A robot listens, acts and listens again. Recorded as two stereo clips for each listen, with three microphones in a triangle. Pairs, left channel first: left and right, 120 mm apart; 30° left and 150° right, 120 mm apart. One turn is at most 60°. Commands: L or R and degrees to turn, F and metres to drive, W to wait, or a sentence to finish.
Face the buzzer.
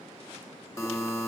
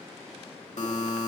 L25
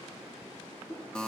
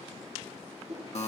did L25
L10
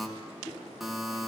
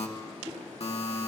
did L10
Facing the buzzer, 1 to 2 m away.